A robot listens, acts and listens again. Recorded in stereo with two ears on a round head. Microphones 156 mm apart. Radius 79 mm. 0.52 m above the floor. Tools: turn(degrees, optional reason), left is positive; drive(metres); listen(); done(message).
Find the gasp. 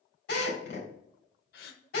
turn(degrees=55, reason="The gasp: about 55° left or 125° left.")
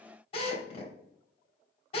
listen()
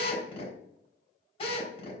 done("I heard a gasp, but can't make it out now. It was about straight ahead or 70° left.")